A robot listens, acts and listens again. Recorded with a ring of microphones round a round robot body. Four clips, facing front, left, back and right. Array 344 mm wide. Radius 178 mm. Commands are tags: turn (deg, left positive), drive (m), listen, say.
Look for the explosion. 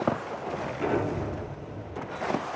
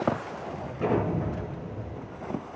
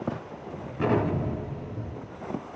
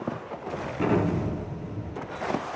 <turn deg="-115"/>
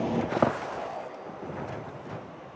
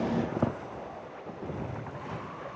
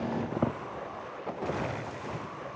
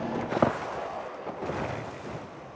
<say>I heard an explosion from this way, but can't make it out now.</say>